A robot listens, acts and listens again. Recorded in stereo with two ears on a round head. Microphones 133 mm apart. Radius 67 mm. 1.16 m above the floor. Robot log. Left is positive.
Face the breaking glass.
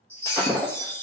note: The breaking glass: about 15° left or 165° left.
cmd yaw +15
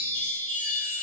cmd idle
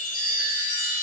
end: I heard breaking glass, but can't make it out now. It was about straight ahead or 150° left.